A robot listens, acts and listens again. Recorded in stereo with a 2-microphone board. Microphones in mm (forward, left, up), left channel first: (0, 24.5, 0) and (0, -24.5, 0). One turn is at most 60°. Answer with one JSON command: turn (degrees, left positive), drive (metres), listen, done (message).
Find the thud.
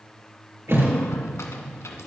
{"turn": -60}
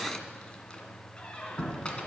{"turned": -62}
{"listen": true}
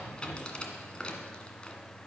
{"done": "I heard a thud, but can't make it out now. It was about straight ahead or 55° right."}